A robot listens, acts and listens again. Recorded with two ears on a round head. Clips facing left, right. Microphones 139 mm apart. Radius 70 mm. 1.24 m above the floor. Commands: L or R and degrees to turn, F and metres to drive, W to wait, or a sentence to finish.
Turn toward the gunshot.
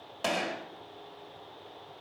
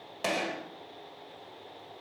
R30
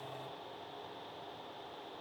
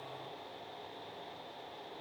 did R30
W
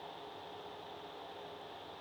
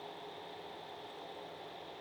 I heard a gunshot, but can't make it out now. It was about 25° left or 145° right.